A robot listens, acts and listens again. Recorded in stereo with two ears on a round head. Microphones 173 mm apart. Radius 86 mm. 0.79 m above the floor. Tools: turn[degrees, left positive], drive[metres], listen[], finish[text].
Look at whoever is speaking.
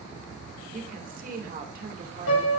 Thought: The woman speaking: about 45° right or 135° right.
Action: turn[-45]
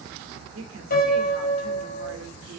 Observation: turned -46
Thought: So it is at 85° right.
Action: turn[-85]
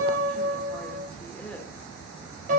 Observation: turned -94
Action: listen[]
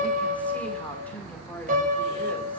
Action: listen[]
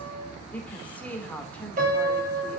Action: finish[Found it: a woman speaking, straight ahead.]